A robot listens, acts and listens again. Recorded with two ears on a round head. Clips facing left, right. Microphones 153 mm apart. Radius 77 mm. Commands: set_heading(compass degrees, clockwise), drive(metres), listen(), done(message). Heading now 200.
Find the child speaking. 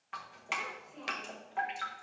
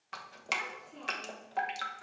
set_heading(290)
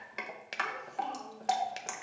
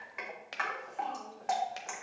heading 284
set_heading(269)
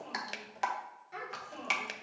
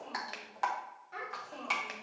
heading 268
set_heading(258)
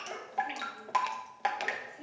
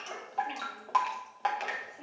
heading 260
done("Facing the child speaking.")